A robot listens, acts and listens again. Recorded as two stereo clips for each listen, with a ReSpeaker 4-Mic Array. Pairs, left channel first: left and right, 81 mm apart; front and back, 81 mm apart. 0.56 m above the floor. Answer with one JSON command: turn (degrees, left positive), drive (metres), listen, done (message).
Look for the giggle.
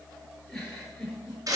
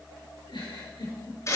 {"done": "Facing the giggle."}